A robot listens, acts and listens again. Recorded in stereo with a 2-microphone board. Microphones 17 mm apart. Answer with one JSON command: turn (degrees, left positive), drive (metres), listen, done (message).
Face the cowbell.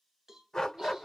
{"turn": -35}
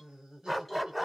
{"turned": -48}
{"listen": true}
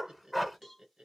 {"turn": 10}
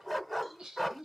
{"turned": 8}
{"listen": true}
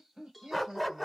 {"done": "Found it: a cowbell, straight ahead, 1 to 2 m away."}